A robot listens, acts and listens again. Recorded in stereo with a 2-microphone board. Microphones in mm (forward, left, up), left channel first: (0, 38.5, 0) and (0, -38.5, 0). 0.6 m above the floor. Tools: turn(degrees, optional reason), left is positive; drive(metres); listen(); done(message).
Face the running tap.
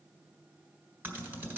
listen()
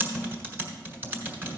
listen()
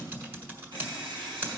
turn(degrees=-90)
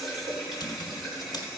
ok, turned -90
done("Facing the running tap, 2 to 4 m away.")